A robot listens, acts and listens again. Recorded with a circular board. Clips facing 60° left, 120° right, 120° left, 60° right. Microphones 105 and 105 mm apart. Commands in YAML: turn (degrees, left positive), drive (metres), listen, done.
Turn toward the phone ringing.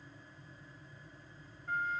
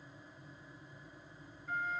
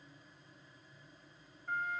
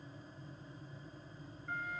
listen: true
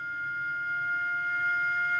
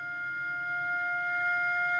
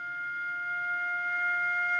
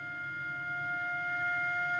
listen: true
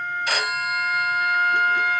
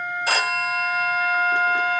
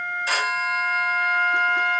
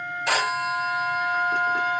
turn: -65
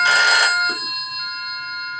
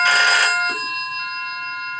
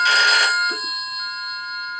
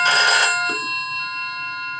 done: "Facing the phone ringing, 2 to 4 m away."